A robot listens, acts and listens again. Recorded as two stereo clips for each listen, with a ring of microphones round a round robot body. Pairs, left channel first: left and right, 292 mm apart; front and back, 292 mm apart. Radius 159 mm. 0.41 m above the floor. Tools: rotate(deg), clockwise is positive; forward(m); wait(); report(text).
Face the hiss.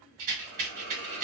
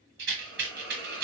rotate(75)
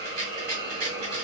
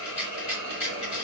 rotate(15)
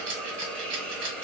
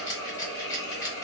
report("Facing the hiss.")